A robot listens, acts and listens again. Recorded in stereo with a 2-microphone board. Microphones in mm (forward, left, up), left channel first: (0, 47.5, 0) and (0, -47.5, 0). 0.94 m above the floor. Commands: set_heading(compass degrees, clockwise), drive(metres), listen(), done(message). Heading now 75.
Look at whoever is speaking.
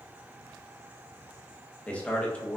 set_heading(45)
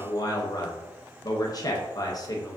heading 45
set_heading(270)
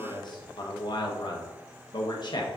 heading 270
set_heading(220)
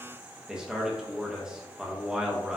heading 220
set_heading(230)
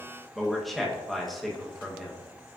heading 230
done("Facing the man speaking, under 1 m away.")